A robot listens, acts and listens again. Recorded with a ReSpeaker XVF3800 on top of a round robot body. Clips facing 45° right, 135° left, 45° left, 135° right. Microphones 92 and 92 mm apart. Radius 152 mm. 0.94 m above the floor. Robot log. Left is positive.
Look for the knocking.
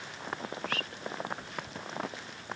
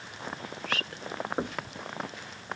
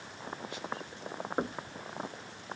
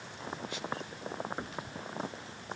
note: The knocking: 95° left.
cmd yaw +95
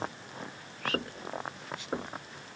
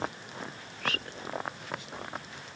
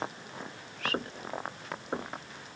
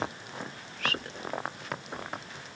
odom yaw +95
end: Facing the knocking.